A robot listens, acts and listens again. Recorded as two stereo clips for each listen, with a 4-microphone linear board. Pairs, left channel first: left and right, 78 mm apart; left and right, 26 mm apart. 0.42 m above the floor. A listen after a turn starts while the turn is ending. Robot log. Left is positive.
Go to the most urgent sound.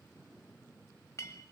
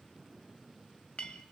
cmd idle
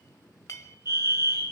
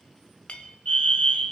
note: The fire alarm: about 55° left or 125° left.
cmd yaw +55
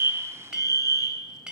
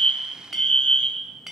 note: So it is at 55° left.
cmd yaw +55
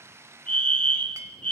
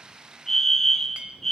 note: The fire alarm is now 15° left.
cmd yaw +15
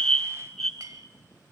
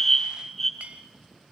cmd fwd 1.0
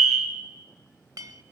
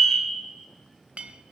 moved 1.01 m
cmd fwd 1.0
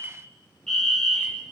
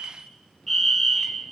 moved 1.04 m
note: The fire alarm is now 10° left.
cmd yaw +10
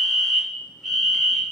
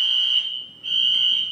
cmd fwd 1.0
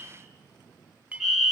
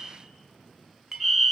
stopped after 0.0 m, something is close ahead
end: I am next to the fire alarm.